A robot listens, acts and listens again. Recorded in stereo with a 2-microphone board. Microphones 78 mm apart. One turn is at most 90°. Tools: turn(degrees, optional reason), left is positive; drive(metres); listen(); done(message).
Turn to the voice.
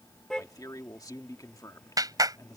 turn(degrees=50, reason="The man speaking: about 50° left or 130° left.")
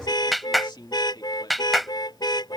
turn(degrees=75, reason="So it is at 75° left.")
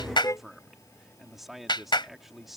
done("Facing the man speaking.")